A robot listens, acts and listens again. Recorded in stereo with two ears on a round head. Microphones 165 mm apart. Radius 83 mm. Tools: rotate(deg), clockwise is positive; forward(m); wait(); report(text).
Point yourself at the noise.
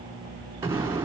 rotate(30)
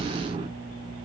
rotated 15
rotate(150)
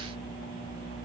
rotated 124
rotate(25)
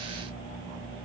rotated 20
report("Facing where the explosion came from. I can't hear it now.")